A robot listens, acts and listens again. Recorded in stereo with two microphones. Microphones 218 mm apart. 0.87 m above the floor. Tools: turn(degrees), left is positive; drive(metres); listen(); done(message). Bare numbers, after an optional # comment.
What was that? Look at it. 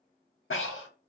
# The breathing: about 70° left or 110° left.
turn(70)
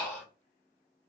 # So it is at 10° left.
turn(10)
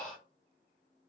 done("Facing the breathing, under 1 m away.")